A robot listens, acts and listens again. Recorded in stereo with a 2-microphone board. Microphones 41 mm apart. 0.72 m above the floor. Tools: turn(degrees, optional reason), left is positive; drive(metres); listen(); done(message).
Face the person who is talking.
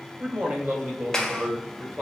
turn(degrees=-50, reason="The man speaking: about 50° right or 130° right.")
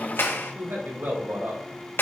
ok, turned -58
turn(degrees=-75, reason="So it is at 75° right.")
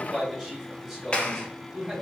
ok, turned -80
turn(degrees=-10, reason="The man speaking is now 10° right.")
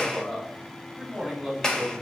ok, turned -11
done("Found it: a man speaking, straight ahead, over 4 m away.")